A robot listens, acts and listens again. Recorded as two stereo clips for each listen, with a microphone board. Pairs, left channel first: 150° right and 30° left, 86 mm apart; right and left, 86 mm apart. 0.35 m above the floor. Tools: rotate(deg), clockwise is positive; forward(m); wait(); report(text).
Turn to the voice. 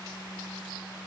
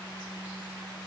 wait()
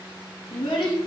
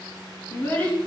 rotate(160)
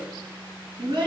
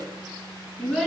report("Found it: a child speaking, straight ahead, 2 to 4 m away.")